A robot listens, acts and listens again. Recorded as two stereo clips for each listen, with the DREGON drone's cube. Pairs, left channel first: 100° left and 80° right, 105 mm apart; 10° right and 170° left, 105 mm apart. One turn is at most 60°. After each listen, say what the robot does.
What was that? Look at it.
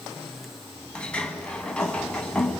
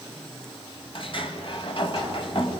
Turn 20° left.
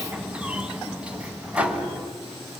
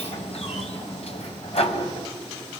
Facing the sliding door, 1 to 2 m away.